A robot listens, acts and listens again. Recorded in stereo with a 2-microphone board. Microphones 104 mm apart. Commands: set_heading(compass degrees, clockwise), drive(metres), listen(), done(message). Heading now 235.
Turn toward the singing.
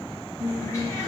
set_heading(265)
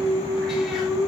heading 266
set_heading(56)
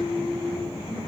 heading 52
set_heading(67)
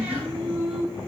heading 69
done("Facing the singing.")